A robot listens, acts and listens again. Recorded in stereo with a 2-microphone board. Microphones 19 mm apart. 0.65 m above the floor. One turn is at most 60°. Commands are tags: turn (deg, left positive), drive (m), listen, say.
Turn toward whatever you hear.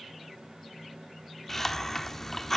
<turn deg="30"/>
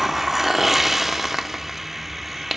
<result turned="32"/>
<turn deg="-20"/>
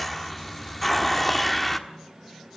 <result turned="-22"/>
<say>Found it: a hiss, straight ahead, 1 to 2 m away.</say>